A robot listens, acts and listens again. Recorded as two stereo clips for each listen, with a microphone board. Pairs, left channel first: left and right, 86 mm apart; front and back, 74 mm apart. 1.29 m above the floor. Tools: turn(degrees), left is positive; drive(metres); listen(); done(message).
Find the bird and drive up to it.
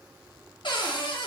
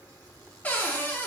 listen()
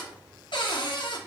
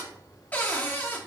listen()
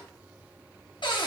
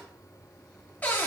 done("I can't make out a bird to turn to.")